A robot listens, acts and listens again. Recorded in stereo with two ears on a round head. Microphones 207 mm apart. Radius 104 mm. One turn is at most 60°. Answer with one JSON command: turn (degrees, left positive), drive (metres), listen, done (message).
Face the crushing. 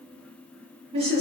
{"listen": true}
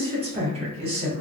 {"listen": true}
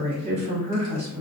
{"done": "I can't make out crushing, only a woman speaking."}